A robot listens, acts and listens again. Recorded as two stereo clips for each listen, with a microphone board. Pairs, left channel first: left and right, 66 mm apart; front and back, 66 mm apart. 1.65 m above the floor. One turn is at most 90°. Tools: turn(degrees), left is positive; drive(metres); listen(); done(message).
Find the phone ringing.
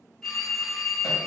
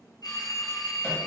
done("Facing the phone ringing.")